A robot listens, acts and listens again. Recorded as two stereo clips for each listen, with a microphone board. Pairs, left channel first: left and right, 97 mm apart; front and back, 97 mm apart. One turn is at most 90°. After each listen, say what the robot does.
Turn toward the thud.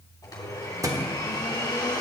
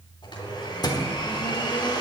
Turn 40° right.
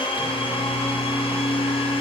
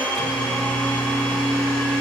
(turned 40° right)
I heard a thud from this way, but can't make it out now.